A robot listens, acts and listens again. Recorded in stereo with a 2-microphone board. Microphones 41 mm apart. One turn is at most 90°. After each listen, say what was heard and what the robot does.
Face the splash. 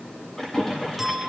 Turn 30° left.
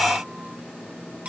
Keep listening.
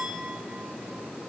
I heard a splash, but can't make it out now. It was about 20° right or 140° left.